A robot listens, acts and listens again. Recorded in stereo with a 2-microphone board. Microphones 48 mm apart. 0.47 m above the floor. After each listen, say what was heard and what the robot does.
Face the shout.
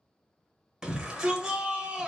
The shout: about 15° right or 165° right. Turn 15° right.
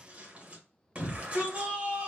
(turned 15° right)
So it is at 150° right. Turn 150° right.
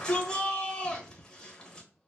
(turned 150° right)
The shout is now 20° left. Turn 20° left.
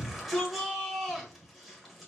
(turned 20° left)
Facing the shout.